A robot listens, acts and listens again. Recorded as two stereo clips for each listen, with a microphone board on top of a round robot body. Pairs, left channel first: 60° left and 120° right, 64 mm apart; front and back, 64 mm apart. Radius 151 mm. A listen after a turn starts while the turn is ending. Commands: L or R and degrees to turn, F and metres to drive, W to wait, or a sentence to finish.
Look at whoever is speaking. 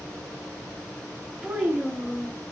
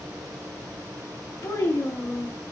R45
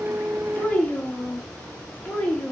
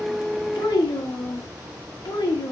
R10
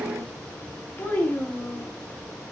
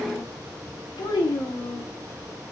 Facing the child speaking.